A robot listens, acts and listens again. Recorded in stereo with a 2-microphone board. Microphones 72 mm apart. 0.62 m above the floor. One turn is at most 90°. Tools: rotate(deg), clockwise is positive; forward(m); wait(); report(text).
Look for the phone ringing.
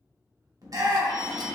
rotate(-60)
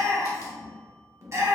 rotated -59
wait()
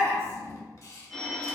report("Found it: a phone ringing, straight ahead, under 1 m away.")